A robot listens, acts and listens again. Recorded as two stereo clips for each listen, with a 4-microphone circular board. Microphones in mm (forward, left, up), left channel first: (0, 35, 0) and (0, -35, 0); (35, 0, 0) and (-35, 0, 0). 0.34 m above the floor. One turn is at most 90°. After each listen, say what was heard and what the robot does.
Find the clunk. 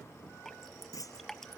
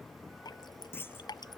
The clunk: 60° left. Turn 60° left.
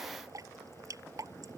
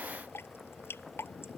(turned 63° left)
Facing where the clunk came from. I can't hear it now.